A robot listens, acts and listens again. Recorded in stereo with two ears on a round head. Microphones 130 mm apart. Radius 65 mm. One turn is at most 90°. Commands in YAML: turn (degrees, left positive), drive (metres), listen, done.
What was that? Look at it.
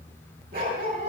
turn: -70
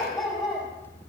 done: "Facing the dog barking, over 4 m away."